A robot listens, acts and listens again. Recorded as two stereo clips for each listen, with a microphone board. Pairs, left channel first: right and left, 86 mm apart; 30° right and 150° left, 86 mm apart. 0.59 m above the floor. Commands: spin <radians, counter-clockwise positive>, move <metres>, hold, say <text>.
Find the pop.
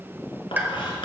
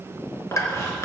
spin 0.35
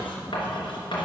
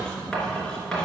say Facing where the pop came from. I can't hear it now.